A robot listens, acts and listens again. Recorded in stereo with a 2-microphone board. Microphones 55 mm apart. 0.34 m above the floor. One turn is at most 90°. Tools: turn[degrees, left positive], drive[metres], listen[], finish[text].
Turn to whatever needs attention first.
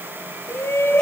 Thought: The shout: about 50° left or 130° left.
Action: turn[50]
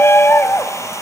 Thought: So it is at 65° left.
Action: turn[65]
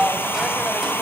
Thought: The shout is now 10° right.
Action: turn[-10]
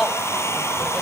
Action: finish[Facing the shout, 1 to 2 m away.]